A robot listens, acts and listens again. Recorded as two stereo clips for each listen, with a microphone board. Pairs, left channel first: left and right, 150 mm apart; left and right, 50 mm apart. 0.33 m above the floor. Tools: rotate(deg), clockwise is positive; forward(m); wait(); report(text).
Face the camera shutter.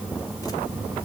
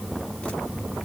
wait()
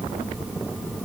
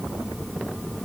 wait()
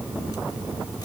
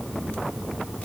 report("I can't make out a camera shutter to turn to.")